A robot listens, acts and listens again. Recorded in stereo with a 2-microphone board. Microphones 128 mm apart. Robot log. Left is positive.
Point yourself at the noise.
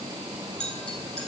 cmd yaw +30
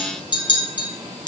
note: So it is at 145° left.
cmd yaw +145
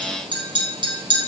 note: The clink is now 40° right.
cmd yaw -40
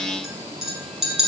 end: Found it: a clink, straight ahead.